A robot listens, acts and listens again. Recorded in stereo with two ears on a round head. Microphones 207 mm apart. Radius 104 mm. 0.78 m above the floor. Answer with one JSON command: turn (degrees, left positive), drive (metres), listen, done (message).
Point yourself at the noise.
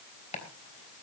{"turn": 30}
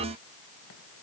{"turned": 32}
{"listen": true}
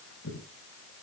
{"turn": 115}
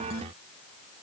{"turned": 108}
{"turn": 10}
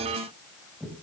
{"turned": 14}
{"done": "Facing the chopping, 2 to 4 m away."}